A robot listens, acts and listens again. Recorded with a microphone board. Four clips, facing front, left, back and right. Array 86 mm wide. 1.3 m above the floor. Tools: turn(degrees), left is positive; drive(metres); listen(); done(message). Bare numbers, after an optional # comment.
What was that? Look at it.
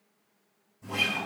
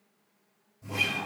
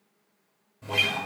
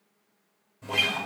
# The guitar: 130° right.
turn(-130)
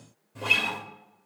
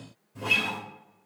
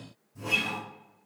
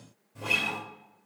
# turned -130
done("Found it: a guitar, straight ahead, 2 to 4 m away.")